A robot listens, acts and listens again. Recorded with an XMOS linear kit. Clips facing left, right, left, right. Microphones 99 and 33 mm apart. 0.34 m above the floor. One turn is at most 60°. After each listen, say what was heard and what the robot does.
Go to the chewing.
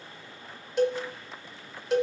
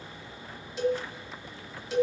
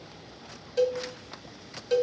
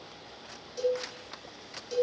Keep listening.
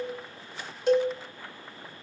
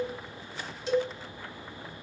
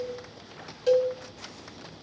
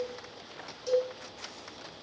Keep listening.
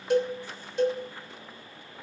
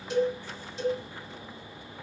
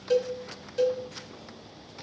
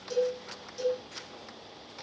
I can't make out chewing, only a cowbell.